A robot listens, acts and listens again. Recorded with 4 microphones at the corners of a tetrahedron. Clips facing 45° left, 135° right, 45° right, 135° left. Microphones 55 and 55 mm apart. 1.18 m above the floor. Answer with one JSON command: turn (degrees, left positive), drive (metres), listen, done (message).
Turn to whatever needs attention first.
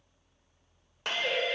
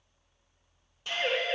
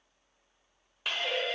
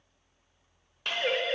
{"turn": 175}
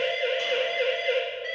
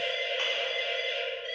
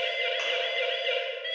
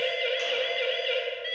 {"turn": 40}
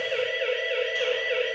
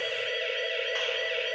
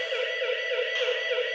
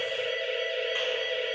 {"turn": -10}
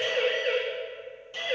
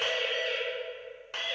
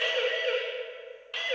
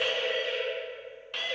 {"done": "Found it: a siren, straight ahead."}